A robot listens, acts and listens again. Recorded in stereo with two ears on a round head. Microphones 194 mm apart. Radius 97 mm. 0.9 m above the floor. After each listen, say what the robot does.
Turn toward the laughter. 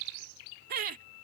Turn 40° right.
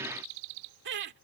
Turn 125° right.
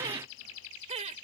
Turn 30° right.
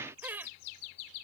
Turn 10° right.
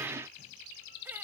Turn 10° right.
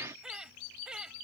Facing the laughter.